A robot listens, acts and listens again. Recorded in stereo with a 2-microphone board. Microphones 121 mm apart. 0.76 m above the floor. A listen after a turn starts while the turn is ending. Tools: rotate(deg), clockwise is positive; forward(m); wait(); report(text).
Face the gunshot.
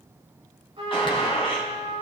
rotate(-45)
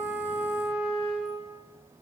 wait()
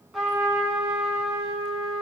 report("I heard a gunshot, but can't make it out now. It was about straight ahead or 90° left.")